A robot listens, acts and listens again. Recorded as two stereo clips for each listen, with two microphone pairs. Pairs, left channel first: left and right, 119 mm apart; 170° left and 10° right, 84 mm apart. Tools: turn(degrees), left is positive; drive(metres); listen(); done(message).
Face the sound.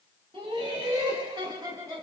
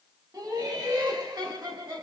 turn(degrees=-30)
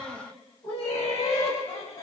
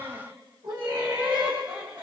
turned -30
turn(degrees=40)
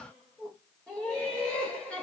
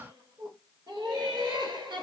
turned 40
turn(degrees=10)
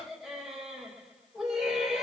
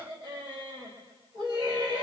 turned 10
done("Found it: laughter, straight ahead.")